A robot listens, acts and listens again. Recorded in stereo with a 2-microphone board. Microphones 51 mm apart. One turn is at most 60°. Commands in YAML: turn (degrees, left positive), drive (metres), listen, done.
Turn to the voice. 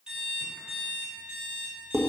listen: true
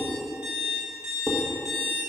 listen: true
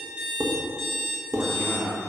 turn: -60
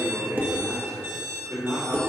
turn: -60
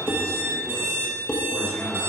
turn: -15
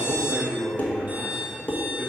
done: "Found it: a man speaking, straight ahead, 2 to 4 m away."